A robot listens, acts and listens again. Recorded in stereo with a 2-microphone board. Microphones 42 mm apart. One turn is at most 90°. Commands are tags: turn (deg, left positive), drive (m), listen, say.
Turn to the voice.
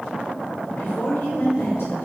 <turn deg="90"/>
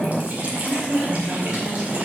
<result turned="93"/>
<turn deg="-10"/>
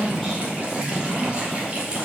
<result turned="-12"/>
<say>Found it: a woman speaking, straight ahead.</say>